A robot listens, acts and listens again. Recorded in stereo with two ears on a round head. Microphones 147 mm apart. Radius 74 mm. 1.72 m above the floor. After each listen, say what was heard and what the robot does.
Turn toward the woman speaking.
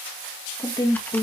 The woman speaking: about 30° left or 150° left. Turn 30° left.
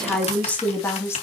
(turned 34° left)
So it is at 15° left. Turn 15° left.
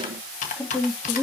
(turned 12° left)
The woman speaking is now 20° left. Turn 20° left.
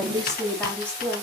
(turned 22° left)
The woman speaking is now 10° left. Turn 10° left.
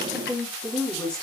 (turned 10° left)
Found it: a woman speaking, straight ahead.